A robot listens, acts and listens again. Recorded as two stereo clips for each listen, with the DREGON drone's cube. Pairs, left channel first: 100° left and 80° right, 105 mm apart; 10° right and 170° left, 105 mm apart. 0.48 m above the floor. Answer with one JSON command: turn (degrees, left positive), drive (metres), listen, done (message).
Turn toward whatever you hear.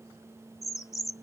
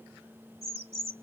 {"turn": 155}
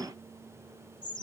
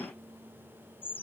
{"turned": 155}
{"turn": 60}
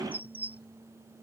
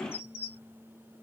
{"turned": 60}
{"done": "Facing the bird."}